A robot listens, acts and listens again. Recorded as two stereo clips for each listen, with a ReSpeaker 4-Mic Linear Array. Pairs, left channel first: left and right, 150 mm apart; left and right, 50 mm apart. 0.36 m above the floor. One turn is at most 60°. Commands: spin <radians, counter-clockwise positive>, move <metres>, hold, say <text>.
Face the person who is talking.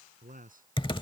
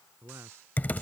spin -1.05
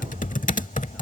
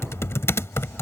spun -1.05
hold
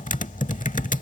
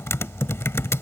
hold
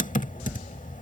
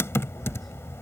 say I heard a man speaking, but can't make it out now. It was about 10° right or 50° right.